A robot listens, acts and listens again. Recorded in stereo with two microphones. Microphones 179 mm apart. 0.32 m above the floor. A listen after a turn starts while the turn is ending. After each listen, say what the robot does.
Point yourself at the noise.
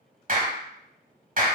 Turn 50° right.
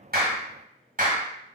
Turn 65° right.
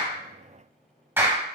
Turn 15° right.
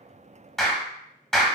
Facing the clap, 1 to 2 m away.